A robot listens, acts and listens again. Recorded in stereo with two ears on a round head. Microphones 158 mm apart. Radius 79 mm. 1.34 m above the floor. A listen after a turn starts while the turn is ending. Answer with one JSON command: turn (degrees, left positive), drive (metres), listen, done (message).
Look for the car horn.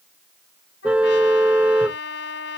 {"turn": -30}
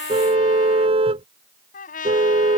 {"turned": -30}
{"turn": -145}
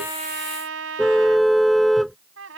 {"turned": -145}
{"done": "Found it: a car horn, straight ahead."}